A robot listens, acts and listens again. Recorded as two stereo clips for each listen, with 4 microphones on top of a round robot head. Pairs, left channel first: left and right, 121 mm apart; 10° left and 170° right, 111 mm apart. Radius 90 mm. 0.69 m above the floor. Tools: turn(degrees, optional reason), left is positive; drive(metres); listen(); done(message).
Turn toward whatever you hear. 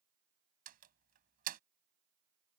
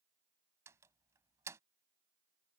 turn(degrees=-95, reason="The door slam: 95° right.")
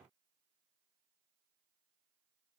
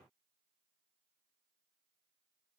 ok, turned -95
done("I heard a door slam from this way, but can't make it out now.")